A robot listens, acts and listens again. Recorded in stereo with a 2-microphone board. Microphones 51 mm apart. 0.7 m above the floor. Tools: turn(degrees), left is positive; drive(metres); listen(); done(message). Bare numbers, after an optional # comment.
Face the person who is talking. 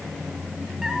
listen()
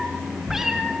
listen()
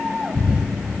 done("I can't make out anyone speaking to turn to.")